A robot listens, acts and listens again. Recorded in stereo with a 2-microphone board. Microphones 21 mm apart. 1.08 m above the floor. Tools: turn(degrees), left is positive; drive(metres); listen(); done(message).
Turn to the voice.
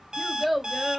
turn(degrees=-30)
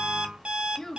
turn(degrees=25)
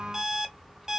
listen()
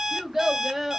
turn(degrees=-15)
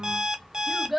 done("Facing the child speaking.")